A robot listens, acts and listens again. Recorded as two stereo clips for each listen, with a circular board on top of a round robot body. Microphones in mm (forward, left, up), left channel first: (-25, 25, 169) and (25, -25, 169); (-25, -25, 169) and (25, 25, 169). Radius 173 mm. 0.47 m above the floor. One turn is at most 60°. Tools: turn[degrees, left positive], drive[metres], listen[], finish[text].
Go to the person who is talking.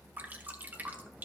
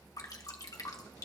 Action: listen[]
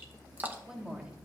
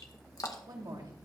Thought: The woman speaking: 30° left.
Action: turn[30]
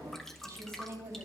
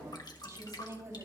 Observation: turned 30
Action: drive[1.0]
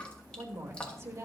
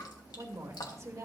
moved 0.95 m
Action: drive[1.0]
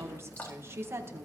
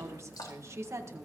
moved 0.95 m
Action: drive[1.0]
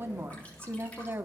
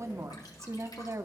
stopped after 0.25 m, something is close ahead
Action: finish[I am next to the woman speaking.]